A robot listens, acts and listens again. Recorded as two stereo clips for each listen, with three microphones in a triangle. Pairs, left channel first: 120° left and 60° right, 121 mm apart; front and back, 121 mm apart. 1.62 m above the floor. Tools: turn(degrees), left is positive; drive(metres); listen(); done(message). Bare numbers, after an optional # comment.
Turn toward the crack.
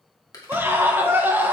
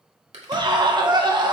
# The crack: 175° left.
turn(175)
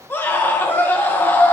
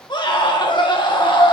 done("Facing where the crack came from. I can't hear it now.")